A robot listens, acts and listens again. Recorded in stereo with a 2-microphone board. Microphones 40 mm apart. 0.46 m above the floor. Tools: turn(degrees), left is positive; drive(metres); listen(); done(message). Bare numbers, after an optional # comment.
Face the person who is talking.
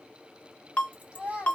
# The child speaking: about 20° right or 160° right.
turn(-20)
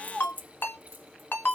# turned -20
done("Facing the child speaking.")